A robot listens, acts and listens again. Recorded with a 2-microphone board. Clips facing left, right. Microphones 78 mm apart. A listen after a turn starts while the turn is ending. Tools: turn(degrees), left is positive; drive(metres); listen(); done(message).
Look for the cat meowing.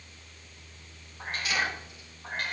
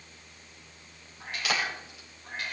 turn(degrees=50)
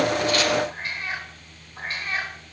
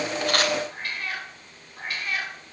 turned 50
turn(degrees=30)
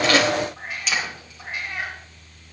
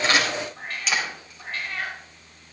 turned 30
turn(degrees=15)
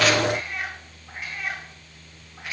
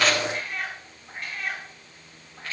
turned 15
done("Facing the cat meowing.")